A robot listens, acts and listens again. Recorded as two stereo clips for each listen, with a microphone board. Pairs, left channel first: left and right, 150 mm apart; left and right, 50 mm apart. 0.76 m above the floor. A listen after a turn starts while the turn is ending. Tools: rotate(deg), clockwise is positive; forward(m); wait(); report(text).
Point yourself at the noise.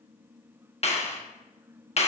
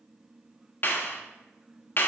rotate(-50)
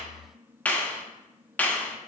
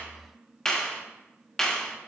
rotate(-15)
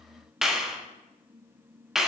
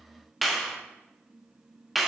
report("Found it: a clap, straight ahead, 1 to 2 m away.")